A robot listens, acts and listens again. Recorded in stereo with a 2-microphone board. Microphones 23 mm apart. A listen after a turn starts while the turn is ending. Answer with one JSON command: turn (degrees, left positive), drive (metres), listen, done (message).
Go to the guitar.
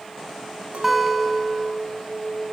{"turn": -30}
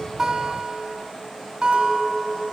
{"turn": -145}
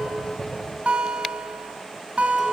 {"turn": -65}
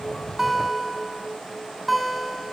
{"drive": 1.0}
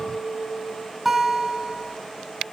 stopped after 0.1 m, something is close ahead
{"turn": -10}
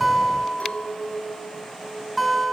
{"done": "Something is in my way. I am facing the guitar but have not reached it."}